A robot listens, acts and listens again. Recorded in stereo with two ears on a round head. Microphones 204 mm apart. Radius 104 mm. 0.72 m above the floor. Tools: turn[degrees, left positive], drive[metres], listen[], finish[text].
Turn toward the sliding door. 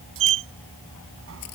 Thought: The sliding door: about 65° right or 115° right.
Action: turn[-65]
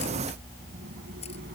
Action: listen[]
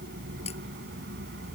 Thought: So it is at 45° right.
Action: turn[-45]
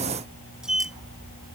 Action: finish[Facing the sliding door.]